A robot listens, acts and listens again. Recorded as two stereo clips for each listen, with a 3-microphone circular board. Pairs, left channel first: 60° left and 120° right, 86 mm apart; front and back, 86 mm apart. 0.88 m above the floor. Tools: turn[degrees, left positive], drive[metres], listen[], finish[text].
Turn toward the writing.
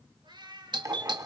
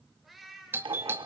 Thought: The writing: 170° right.
Action: turn[-170]
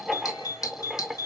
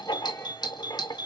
Thought: The writing is now 30° right.
Action: turn[-30]
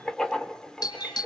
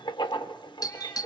Thought: The writing is now 20° right.
Action: turn[-20]
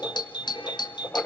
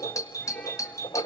Action: finish[Found it: writing, straight ahead.]